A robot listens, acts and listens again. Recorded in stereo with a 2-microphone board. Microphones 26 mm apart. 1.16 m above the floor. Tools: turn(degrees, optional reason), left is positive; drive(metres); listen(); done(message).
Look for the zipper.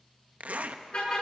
turn(degrees=-65, reason="The zipper: about 65° right or 115° right.")
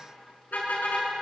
listen()
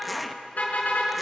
done("Facing the zipper.")